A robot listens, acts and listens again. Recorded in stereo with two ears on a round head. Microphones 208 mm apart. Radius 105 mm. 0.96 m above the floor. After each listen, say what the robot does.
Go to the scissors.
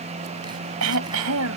Keep listening.
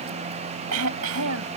Keep listening.
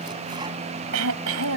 I can't make out scissors, only throat clearing.